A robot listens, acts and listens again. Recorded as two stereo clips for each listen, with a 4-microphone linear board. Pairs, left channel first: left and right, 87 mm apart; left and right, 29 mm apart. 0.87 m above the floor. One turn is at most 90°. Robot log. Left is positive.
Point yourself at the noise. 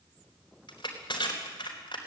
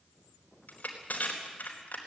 note: The crushing: about 60° left or 120° left.
cmd yaw +60
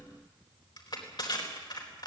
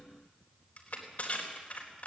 note: So it is at 60° left.
cmd yaw +60
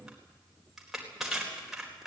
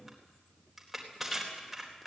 end: Facing the crushing, over 4 m away.